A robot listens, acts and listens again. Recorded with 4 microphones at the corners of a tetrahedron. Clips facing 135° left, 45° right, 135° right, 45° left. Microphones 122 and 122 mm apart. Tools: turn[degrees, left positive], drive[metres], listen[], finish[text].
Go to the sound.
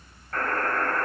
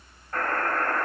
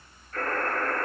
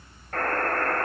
Thought: The buzzer: 25° left.
Action: turn[25]
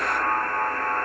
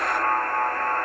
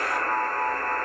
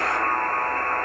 Thought: The buzzer is now 15° left.
Action: turn[15]
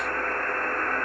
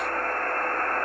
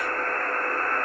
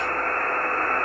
Action: drive[1.0]
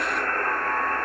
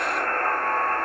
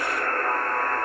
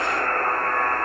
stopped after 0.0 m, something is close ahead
Action: finish[Something is in my way. I am facing the buzzer but have not reached it.]